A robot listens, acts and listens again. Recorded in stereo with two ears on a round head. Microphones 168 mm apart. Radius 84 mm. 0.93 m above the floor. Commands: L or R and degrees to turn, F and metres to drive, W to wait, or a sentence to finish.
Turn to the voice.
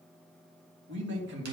R70
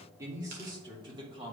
R30
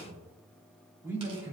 R15
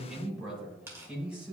Facing the man speaking.